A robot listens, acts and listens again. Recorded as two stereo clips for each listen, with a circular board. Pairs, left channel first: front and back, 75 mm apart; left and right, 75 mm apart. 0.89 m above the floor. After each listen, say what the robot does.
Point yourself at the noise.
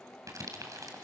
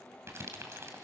Turn 140° right.
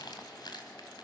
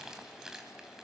Found it: crumpling, straight ahead, 2 to 4 m away.